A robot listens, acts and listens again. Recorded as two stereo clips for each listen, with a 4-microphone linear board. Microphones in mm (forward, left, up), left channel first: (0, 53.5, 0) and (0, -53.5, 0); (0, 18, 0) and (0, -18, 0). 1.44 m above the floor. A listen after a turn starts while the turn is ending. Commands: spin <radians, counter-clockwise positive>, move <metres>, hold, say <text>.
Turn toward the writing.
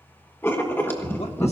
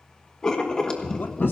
spin 0.35
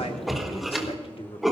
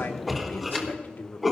say Facing the writing, 1 to 2 m away.